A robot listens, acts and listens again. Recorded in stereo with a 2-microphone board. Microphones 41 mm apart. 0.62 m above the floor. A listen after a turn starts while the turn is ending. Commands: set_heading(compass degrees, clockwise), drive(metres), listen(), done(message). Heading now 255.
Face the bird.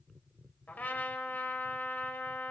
listen()
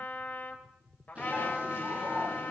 set_heading(290)
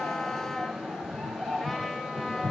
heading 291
done("Facing the bird, over 4 m away.")